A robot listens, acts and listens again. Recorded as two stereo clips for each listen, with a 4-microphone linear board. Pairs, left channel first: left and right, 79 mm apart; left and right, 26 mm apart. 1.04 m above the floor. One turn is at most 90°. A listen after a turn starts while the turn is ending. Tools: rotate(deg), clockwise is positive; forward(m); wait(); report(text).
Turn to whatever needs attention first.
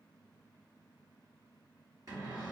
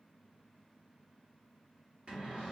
wait()
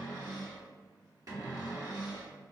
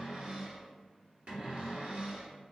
wait()
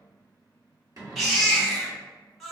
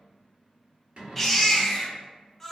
rotate(-30)
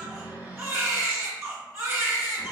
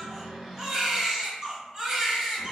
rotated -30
rotate(30)
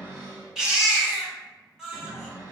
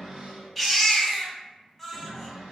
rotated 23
rotate(10)
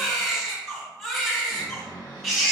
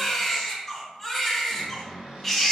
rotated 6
report("Found it: a baby crying, straight ahead, 1 to 2 m away.")